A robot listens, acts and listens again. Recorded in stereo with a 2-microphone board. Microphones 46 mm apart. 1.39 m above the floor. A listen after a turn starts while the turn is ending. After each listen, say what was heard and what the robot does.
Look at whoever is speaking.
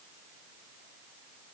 Keep listening.
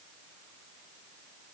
Keep listening.
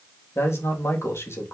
The man speaking: about 70° left or 110° left. Turn 70° left.
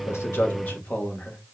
So it is at 40° left. Turn 40° left.
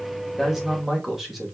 Facing the man speaking, 2 to 4 m away.